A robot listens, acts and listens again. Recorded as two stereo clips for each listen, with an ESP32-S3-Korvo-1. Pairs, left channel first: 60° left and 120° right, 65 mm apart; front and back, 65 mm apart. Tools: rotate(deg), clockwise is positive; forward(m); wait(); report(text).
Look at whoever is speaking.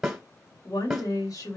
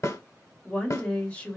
rotate(-70)
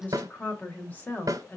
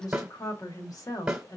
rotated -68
report("Found it: a woman speaking, straight ahead.")